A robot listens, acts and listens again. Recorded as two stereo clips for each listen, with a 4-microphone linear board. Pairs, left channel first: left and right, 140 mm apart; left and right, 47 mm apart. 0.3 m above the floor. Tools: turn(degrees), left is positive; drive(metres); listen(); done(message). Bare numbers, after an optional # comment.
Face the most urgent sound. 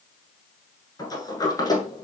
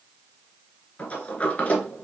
listen()
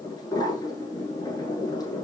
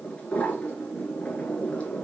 listen()
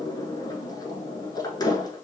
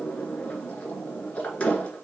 done("I can't make out anything urgent to turn to.")